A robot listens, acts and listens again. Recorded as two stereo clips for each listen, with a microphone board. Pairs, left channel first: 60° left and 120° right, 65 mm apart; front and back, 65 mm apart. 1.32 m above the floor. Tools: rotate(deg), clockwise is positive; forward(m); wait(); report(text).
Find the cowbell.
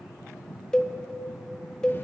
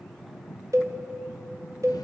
rotate(-140)
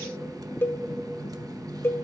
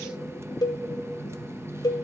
report("Facing the cowbell, 1 to 2 m away.")